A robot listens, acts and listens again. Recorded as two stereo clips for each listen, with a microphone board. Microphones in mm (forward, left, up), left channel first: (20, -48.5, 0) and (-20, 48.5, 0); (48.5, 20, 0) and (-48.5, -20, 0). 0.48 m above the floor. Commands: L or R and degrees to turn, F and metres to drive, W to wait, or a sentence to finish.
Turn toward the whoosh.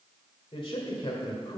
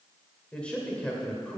W
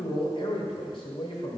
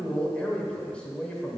W
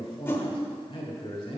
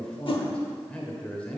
Found it: a whoosh, straight ahead, under 1 m away.